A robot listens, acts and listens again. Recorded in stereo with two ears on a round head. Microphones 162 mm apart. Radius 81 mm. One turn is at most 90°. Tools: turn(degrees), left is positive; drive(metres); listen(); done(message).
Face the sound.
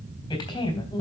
turn(degrees=20)
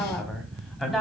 done("Facing the woman speaking.")